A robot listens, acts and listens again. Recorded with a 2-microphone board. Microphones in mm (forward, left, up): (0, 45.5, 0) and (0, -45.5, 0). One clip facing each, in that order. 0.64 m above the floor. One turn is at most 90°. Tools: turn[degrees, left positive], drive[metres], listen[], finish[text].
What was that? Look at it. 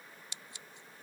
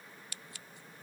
Thought: The scissors: about 25° left or 155° left.
Action: turn[25]
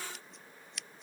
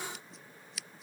Action: finish[Found it: scissors, straight ahead.]